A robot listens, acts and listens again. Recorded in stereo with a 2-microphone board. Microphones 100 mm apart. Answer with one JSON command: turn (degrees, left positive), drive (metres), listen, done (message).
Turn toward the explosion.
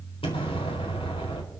{"turn": 70}
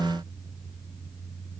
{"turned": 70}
{"listen": true}
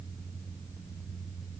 {"done": "I heard an explosion, but can't make it out now. It was about straight ahead or 40° left."}